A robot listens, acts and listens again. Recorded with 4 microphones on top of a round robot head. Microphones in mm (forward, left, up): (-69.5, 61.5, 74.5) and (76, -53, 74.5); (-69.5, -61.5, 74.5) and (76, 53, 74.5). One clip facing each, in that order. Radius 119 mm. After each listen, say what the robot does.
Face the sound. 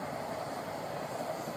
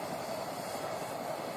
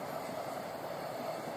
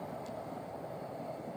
Keep listening.
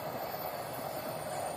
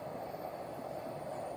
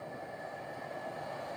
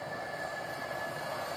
Keep listening.
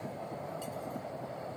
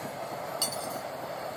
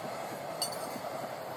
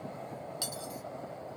Turn 45° right.
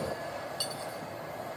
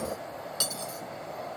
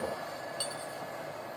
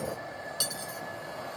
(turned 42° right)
Facing the cutlery clinking.